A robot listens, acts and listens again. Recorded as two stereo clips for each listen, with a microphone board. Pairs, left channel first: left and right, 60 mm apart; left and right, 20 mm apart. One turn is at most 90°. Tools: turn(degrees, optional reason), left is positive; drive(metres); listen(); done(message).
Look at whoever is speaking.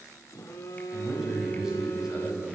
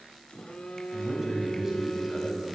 turn(degrees=-30)
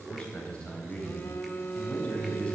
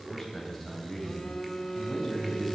turn(degrees=20, reason="So it is at 20° left.")
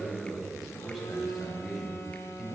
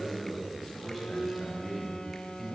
done("Facing the man speaking, over 4 m away.")